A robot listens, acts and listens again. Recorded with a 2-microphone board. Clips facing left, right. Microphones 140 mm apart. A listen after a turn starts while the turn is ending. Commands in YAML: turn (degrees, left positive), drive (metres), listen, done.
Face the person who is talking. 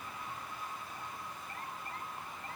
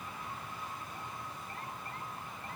listen: true
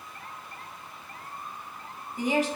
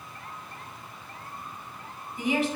turn: 40
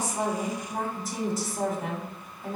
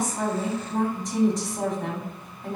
turn: 10
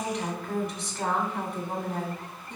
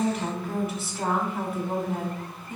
done: "Facing the woman speaking."